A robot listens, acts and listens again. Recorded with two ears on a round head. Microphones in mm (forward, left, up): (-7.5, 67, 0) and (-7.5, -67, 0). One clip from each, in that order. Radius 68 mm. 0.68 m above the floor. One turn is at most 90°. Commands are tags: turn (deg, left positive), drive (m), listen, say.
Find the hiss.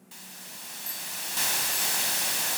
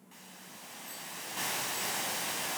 <turn deg="60"/>
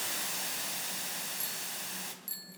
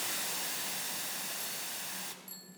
<say>Facing the hiss, 2 to 4 m away.</say>